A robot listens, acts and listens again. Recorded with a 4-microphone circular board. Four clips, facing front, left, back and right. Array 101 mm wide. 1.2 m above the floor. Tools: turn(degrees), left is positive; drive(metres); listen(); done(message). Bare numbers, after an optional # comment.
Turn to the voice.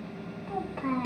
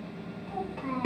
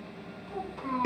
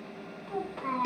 done("Found it: a child speaking, straight ahead, 1 to 2 m away.")